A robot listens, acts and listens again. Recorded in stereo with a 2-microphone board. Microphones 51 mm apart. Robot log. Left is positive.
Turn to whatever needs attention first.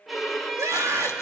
cmd yaw -90
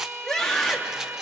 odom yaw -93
end: Found it: a scream, straight ahead, 2 to 4 m away.